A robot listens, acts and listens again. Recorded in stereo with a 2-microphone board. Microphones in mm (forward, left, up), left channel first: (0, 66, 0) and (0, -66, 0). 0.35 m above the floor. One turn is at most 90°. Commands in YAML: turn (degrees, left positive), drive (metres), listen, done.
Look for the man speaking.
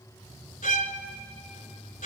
listen: true
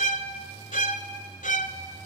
listen: true
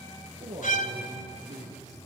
turn: -75
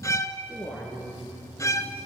done: "Found it: a man speaking, straight ahead."